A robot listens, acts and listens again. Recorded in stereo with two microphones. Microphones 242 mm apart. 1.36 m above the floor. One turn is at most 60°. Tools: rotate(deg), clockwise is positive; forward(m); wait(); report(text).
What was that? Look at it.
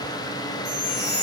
rotate(45)
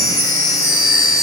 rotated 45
report("Found it: a chime, straight ahead, 2 to 4 m away.")